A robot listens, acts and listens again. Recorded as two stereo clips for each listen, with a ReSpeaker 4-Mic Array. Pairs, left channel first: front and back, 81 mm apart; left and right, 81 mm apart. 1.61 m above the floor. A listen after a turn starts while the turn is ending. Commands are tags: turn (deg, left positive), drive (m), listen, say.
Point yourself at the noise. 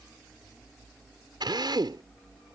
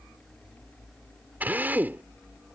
<turn deg="-160"/>
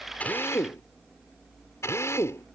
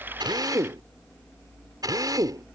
<turn deg="-55"/>
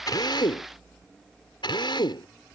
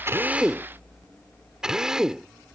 <turn deg="-10"/>
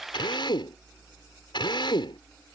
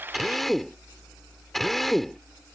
<say>Found it: a drill, straight ahead.</say>